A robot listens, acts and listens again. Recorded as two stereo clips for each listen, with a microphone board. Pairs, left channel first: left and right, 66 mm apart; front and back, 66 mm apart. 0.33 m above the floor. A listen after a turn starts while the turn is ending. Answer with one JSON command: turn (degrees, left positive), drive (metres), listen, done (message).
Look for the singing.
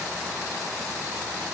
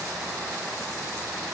{"listen": true}
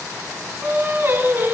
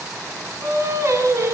{"turn": -140}
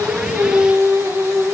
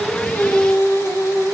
{"turn": -45}
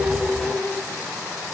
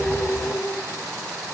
{"turn": 10}
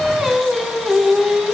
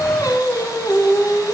{"done": "Found it: singing, straight ahead."}